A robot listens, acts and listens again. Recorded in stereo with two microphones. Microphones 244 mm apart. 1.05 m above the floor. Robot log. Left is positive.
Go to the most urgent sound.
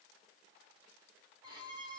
cmd idle
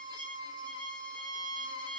cmd idle
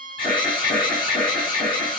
note: The alarm: about 20° left or 160° left.
cmd yaw +20
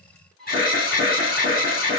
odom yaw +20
note: So it is at 140° left.
cmd yaw +140
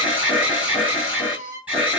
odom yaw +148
cmd fwd 1.0
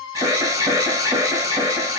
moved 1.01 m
note: The alarm is now 15° right.
cmd yaw -15
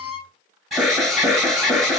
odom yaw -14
cmd fwd 1.0
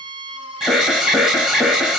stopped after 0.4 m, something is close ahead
end: Arrived at the alarm, straight ahead.